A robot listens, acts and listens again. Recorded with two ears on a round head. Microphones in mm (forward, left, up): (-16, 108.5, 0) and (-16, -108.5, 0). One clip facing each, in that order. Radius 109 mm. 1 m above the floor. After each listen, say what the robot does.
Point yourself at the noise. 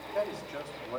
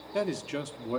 Turn 50° right.
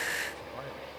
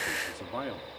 Turn 75° right.
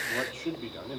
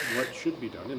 Turn 25° right.
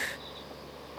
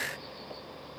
Keep listening.
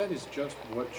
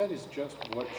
Turn 15° left.
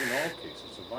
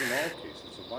Found it: a man speaking, straight ahead.